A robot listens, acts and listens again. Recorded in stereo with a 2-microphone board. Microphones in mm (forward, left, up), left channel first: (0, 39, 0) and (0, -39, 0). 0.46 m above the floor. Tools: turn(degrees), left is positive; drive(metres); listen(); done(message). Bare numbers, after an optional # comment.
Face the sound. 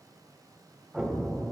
turn(-30)
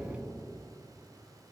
# So it is at 135° right.
turn(-135)
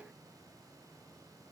done("I heard an explosion from this way, but can't make it out now.")